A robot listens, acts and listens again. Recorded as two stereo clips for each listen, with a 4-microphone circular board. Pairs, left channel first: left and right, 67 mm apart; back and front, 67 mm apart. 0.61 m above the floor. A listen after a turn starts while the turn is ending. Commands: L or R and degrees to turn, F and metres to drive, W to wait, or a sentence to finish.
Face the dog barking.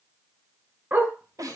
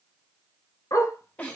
R150
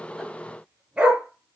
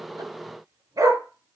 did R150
R15
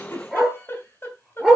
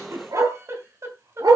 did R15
Found it: a dog barking, straight ahead, over 4 m away.